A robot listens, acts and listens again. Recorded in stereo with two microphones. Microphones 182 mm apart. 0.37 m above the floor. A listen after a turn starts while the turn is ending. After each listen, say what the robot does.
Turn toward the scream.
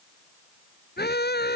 Turn 65° left.
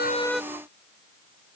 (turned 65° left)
Keep listening.
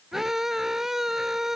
Found it: a scream, straight ahead.